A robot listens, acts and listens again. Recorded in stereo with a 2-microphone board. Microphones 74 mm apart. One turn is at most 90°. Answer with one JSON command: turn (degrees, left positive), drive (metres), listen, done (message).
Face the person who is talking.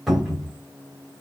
{"listen": true}
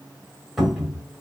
{"listen": true}
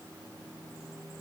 {"done": "I can't make out anyone speaking to turn to."}